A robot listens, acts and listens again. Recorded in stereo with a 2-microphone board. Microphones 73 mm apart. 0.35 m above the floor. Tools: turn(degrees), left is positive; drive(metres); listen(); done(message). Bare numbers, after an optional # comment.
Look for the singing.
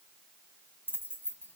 listen()
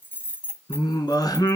# The singing: about 75° left or 105° left.
turn(75)
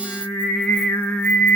# So it is at 20° left.
turn(20)
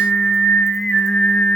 done("Facing the singing.")